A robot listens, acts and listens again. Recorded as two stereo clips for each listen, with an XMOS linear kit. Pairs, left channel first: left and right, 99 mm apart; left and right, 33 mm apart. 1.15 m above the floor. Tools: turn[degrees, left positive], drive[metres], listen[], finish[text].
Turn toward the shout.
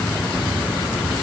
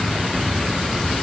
Action: listen[]
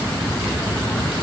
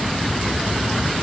Action: listen[]
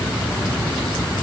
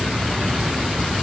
Action: finish[I can't make out a shout.]